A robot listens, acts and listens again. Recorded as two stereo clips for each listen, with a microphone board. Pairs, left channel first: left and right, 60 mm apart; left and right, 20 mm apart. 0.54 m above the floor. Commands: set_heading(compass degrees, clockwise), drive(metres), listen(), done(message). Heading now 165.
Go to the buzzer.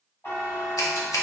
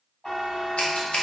set_heading(120)
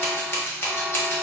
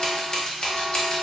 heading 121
listen()
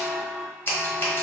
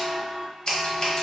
drive(1.0)
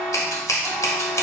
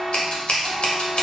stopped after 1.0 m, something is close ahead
done("Arrived at the buzzer, straight ahead.")